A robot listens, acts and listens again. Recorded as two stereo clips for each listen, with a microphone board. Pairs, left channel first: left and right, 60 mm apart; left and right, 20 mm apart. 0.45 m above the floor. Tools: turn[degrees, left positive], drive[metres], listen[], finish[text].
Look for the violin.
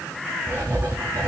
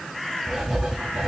Action: listen[]
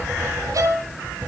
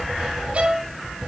Thought: The violin: about 70° right or 110° right.
Action: turn[-70]
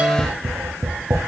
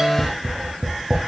Thought: So it is at 30° right.
Action: turn[-30]
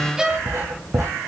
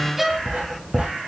Thought: The violin is now 10° right.
Action: turn[-10]
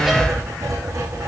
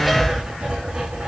Action: listen[]
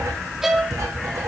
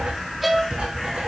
Action: finish[Found it: a violin, straight ahead, 2 to 4 m away.]